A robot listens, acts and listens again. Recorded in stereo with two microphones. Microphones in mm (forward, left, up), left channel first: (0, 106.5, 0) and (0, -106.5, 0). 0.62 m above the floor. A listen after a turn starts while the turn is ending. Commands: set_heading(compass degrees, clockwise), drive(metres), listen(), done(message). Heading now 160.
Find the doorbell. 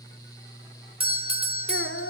set_heading(185)
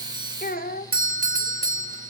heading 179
set_heading(319)
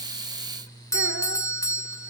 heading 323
set_heading(308)
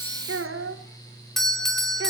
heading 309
done("Found it: a doorbell, straight ahead, 1 to 2 m away.")